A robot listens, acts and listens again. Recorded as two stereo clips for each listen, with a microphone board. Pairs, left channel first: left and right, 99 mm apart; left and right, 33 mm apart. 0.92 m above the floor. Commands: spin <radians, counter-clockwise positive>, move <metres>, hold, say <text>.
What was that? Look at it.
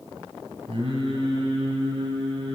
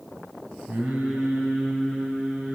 spin -1.13
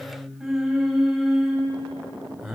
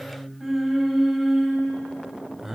say Found it: singing, straight ahead.